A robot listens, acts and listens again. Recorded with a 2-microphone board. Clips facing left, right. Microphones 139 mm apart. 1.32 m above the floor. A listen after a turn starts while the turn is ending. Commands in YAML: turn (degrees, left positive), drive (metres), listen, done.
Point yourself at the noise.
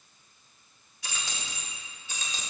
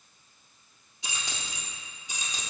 turn: -30
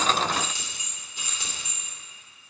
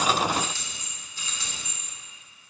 turn: 20
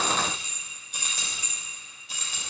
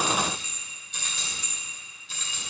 turn: 15
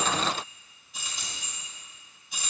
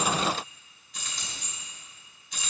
done: "Found it: keys jangling, straight ahead, 2 to 4 m away."